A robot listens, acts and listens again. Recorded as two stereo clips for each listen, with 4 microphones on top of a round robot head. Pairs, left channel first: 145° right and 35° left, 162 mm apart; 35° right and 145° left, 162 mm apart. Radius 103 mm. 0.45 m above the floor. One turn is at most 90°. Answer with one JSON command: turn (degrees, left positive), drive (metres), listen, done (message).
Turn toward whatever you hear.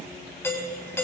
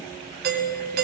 {"turn": 90}
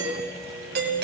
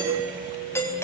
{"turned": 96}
{"turn": 40}
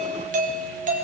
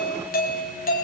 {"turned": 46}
{"done": "Facing the doorbell."}